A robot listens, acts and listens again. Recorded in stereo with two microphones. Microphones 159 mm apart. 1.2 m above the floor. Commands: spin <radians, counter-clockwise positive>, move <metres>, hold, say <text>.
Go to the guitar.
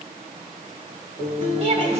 spin 1.05
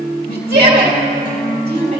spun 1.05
spin 1.05
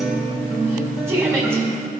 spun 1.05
move 1.0
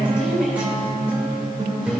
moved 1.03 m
spin -0.17
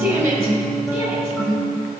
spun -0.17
move 1.0
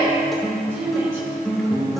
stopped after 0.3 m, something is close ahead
say I am next to the guitar.